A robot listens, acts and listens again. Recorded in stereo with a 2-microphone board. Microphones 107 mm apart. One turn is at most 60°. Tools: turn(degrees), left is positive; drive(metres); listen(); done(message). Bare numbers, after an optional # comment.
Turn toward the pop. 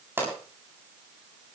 # The pop: about 20° right or 160° right.
turn(-20)
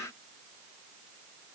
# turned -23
listen()
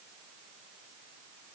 done("I heard a pop, but can't make it out now. It was about straight ahead or 135° right.")